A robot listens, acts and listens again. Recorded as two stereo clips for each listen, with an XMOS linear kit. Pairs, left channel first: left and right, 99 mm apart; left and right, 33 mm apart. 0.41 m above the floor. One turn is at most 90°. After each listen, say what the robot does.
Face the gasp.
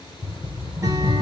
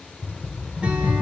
Keep listening.
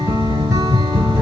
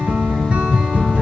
Keep listening.
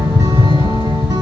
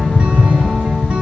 I can't make out a gasp, only a rattle.